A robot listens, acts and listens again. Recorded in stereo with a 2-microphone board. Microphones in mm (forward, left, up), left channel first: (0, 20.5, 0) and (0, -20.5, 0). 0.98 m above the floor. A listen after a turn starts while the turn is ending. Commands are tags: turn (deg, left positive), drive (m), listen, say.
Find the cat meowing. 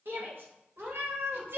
<turn deg="-90"/>
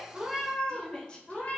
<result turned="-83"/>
<turn deg="40"/>
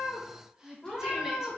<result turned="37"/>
<turn deg="25"/>
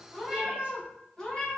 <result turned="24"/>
<turn deg="15"/>
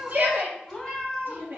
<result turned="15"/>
<say>Facing the cat meowing, 2 to 4 m away.</say>